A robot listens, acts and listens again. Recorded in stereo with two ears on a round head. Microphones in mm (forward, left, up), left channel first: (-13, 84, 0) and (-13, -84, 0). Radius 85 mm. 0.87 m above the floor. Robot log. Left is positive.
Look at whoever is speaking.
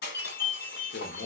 note: The man speaking: about 55° left or 125° left.
cmd yaw +55
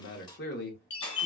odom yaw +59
note: So it is at 60° left.
cmd yaw +60
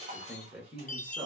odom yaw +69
note: The man speaking is now 10° right.
cmd yaw -10
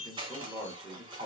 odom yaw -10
end: Facing the man speaking, 1 to 2 m away.